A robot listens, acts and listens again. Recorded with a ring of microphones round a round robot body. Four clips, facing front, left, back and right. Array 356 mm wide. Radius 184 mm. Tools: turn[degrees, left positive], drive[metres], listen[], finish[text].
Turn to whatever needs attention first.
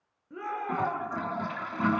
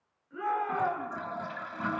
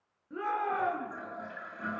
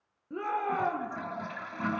Thought: The shout: 95° right.
Action: turn[-95]
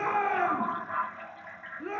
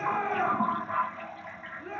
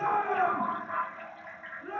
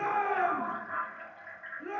Action: finish[Facing the shout, over 4 m away.]